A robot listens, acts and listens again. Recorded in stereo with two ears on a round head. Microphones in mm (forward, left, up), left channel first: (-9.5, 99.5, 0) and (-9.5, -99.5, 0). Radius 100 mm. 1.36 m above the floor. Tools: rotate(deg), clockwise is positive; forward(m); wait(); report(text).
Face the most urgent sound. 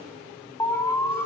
rotate(-30)
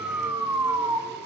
rotate(15)
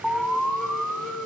report("Facing the alarm.")